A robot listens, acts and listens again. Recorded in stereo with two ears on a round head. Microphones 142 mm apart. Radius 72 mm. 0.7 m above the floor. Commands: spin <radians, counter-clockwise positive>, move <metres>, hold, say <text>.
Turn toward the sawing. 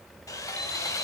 spin 0.35
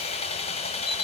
spin 2.36
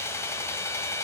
spin 0.35
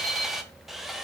say Facing the sawing.